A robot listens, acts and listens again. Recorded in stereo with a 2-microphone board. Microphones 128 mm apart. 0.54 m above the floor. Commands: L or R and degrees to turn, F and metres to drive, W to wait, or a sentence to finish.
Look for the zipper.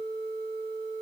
W
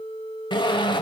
L40
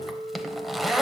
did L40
Found it: a zipper, straight ahead, under 1 m away.